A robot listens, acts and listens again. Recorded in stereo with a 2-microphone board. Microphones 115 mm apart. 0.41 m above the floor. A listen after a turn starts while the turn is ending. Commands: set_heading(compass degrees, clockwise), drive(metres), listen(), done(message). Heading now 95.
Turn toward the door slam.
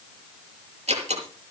set_heading(160)
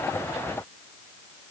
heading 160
listen()
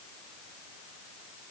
done("I heard a door slam, but can't make it out now. It was about straight ahead or 50° right.")